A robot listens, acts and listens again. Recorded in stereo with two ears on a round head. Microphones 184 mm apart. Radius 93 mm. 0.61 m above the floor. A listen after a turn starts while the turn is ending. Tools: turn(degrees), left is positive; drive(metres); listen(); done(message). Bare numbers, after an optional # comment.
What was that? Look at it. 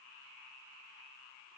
listen()
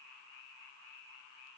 listen()
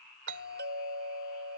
# The doorbell: about 60° right or 120° right.
turn(-60)
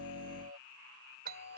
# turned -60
# So it is at 50° right.
turn(-50)
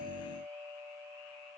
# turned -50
# The doorbell is now 10° right.
turn(-10)
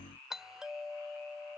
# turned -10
done("Facing the doorbell.")